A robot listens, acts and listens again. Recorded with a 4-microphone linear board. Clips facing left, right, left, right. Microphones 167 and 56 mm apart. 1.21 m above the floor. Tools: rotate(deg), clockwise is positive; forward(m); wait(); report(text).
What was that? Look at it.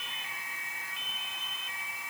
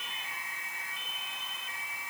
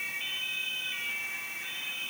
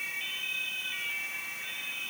wait()
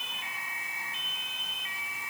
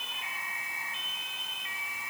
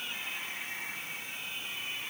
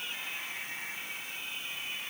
wait()
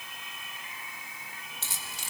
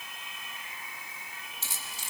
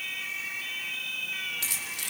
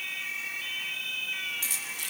rotate(-70)
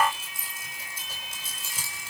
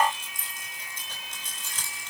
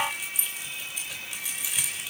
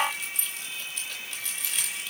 rotate(-10)
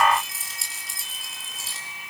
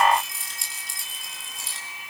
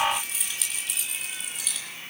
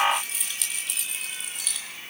report("Facing the keys jangling.")